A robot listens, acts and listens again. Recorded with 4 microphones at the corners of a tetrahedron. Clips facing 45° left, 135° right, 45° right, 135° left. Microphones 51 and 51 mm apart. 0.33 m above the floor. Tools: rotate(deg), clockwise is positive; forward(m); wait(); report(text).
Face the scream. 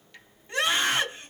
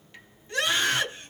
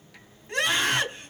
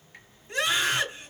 rotate(20)
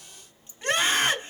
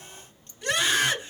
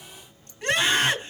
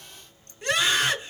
report("Found it: a scream, straight ahead.")